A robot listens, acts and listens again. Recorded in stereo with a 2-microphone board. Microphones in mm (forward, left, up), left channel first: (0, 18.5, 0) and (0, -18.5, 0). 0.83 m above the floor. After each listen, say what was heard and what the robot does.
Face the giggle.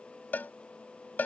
Keep listening.
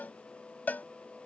Keep listening.
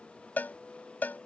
I can't make out a giggle to turn to.